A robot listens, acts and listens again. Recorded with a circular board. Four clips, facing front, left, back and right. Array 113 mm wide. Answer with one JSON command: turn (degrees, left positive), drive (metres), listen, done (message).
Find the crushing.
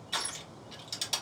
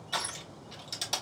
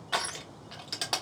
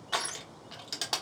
{"turn": -145}
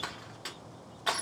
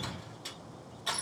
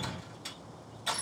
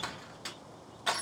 {"turn": -30}
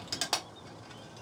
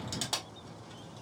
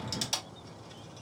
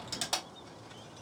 {"done": "Facing the crushing, 1 to 2 m away."}